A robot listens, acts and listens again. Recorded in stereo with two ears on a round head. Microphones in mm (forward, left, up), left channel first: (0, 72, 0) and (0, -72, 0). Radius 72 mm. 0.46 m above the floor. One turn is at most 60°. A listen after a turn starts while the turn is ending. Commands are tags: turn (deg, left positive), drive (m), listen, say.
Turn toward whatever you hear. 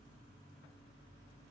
<listen/>
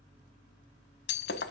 <turn deg="60"/>
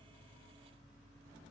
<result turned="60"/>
<listen/>
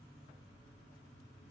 <say>I heard breaking glass, but can't make it out now. It was about 15° left or 45° left.</say>